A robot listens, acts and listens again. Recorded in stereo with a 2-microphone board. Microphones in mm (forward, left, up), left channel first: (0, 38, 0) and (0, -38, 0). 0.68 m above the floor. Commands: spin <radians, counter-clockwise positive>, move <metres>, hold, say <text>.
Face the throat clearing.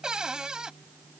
hold
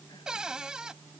hold
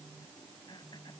spin 1.57
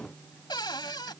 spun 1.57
hold
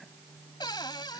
hold
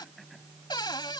say Facing where the throat clearing came from. I can't hear it now.